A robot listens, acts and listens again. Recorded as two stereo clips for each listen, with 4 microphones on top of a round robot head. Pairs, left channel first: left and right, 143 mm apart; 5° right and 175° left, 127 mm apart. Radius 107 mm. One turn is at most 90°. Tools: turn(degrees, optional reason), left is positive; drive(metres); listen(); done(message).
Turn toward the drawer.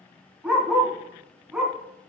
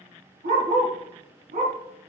listen()
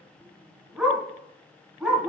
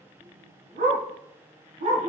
listen()
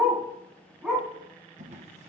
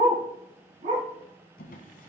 turn(degrees=-35, reason="The drawer: 35° right.")
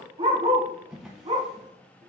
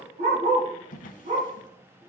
done("Found it: a drawer, straight ahead.")